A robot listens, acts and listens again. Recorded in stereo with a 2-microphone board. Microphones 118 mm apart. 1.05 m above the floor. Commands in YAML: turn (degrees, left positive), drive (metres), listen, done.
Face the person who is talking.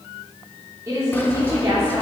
turn: -25
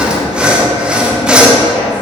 listen: true
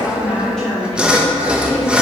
done: "Found it: a woman speaking, straight ahead."